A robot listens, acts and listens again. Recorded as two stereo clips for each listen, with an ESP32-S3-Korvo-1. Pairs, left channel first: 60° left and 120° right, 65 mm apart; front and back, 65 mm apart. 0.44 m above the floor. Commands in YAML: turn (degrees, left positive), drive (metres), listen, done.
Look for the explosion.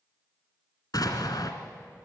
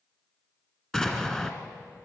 turn: 80
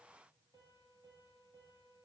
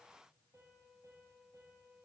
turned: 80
done: "I heard an explosion from this way, but can't make it out now."